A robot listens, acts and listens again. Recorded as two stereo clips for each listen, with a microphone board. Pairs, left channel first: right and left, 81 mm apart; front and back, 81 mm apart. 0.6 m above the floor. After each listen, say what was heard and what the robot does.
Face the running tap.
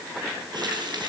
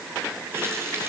The running tap: 120° left. Turn 120° left.
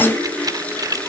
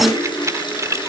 The running tap is now 15° right. Turn 15° right.
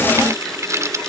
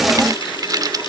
Keep listening.
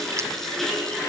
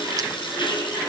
Facing the running tap.